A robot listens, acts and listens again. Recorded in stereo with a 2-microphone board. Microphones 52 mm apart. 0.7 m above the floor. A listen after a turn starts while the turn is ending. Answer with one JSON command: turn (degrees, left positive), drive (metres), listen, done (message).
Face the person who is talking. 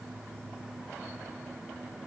{"listen": true}
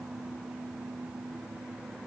{"listen": true}
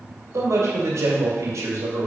{"turn": -65}
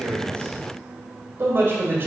{"turn": -45}
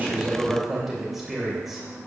{"done": "Facing the man speaking."}